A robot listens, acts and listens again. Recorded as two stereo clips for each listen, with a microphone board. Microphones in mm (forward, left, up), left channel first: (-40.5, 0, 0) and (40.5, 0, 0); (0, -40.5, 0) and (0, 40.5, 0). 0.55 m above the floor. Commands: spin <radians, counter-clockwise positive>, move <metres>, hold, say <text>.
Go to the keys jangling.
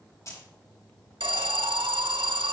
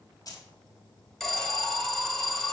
spin -2.27
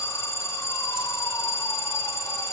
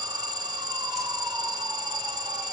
hold
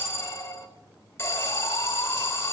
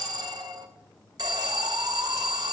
hold
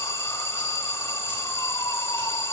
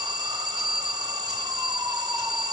say I heard keys jangling from this way, but can't make it out now. I did not reach it.